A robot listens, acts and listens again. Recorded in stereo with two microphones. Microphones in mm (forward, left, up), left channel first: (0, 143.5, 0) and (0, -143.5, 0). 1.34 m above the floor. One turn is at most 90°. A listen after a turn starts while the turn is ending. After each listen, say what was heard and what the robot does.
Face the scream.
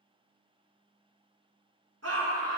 The scream: about 65° right or 115° right. Turn 65° right.
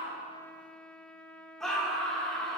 Facing the scream.